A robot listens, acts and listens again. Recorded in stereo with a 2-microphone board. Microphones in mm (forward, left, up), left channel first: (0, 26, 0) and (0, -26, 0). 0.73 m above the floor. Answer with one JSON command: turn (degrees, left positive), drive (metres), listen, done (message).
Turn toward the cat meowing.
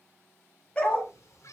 {"turn": 90}
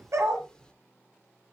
{"turn": 15}
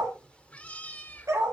{"turn": 35}
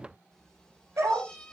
{"turn": 20}
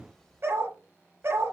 {"turn": 15}
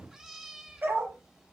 {"done": "Facing the cat meowing."}